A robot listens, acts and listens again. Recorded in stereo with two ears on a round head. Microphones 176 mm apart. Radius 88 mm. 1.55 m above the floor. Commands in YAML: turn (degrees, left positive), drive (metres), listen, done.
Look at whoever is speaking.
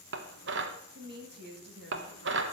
turn: -55
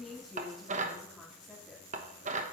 done: "Facing the woman speaking, 2 to 4 m away."